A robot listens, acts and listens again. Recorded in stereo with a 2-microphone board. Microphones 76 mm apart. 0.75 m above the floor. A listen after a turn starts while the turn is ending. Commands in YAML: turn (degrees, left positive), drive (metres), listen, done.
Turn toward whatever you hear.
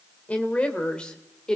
turn: 30
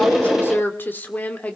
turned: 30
turn: 20
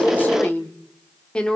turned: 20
turn: 30
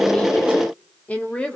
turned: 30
turn: 30
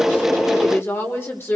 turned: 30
turn: 145
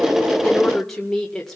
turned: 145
done: "Facing the woman speaking."